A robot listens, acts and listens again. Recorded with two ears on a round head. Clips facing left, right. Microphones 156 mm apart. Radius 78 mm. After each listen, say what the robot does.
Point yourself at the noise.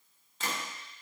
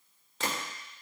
Turn 55° right.
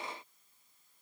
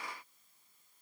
Keep listening.
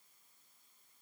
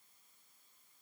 I heard a gunshot, but can't make it out now. It was about straight ahead or 70° right.